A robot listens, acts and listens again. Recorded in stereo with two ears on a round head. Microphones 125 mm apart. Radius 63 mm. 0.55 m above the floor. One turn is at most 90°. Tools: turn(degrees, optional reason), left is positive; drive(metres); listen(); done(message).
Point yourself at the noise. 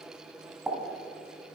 turn(degrees=-30)
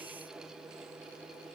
listen()
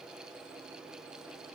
done("I heard a pop, but can't make it out now. It was about 25° left or 145° right.")